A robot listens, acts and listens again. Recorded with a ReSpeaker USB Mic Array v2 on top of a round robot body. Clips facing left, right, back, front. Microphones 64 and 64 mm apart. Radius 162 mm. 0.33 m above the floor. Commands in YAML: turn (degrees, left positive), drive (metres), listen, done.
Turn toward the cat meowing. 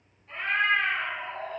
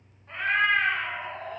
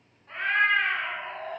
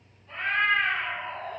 turn: -130
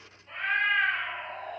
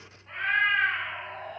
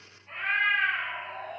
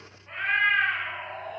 turn: -30
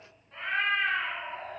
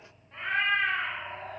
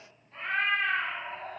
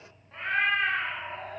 done: "Facing the cat meowing, 1 to 2 m away."